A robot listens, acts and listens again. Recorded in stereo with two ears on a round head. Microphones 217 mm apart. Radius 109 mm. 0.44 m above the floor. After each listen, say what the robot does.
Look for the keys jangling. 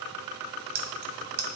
Turn 40° right.
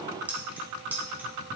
Found it: keys jangling, straight ahead.